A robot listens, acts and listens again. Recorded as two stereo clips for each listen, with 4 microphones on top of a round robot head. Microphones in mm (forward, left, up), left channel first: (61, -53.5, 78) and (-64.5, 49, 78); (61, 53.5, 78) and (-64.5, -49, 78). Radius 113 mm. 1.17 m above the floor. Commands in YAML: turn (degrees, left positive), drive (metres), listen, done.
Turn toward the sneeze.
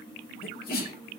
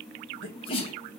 turn: -15
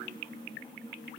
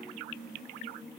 done: "Facing where the sneeze came from. I can't hear it now."